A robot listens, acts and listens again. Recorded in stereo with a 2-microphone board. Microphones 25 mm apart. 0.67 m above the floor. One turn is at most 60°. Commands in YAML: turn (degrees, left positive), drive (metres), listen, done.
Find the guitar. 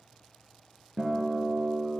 turn: 30
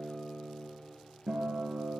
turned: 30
turn: -25
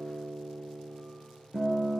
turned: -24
done: "Found it: a guitar, straight ahead."